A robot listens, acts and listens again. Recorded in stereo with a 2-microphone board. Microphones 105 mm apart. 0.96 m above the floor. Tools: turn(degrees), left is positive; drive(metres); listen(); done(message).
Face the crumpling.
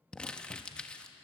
turn(degrees=30)
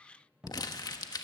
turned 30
turn(degrees=135)
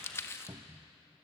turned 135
turn(degrees=30)
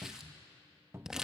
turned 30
done("Found it: crumpling, straight ahead, 1 to 2 m away.")